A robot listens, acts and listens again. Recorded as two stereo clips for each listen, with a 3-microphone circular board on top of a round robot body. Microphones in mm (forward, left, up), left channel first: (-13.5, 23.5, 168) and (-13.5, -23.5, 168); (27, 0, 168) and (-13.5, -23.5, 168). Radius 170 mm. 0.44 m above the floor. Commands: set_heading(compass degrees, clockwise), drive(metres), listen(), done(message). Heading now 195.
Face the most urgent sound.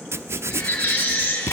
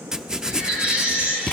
set_heading(50)
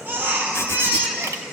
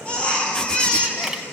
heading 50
set_heading(90)
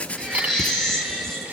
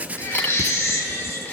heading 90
set_heading(80)
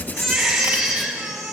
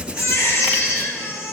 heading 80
done("Facing the baby crying.")